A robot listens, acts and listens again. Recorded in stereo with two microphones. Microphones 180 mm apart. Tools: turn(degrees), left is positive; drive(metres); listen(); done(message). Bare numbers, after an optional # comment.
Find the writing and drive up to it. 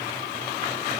listen()
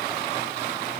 listen()
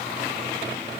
done("I can't make out writing to turn to.")